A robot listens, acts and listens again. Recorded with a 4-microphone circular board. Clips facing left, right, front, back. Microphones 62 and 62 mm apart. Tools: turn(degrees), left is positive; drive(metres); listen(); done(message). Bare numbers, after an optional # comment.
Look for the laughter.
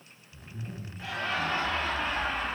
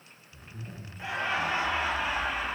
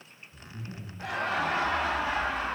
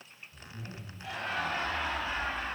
done("Facing the laughter.")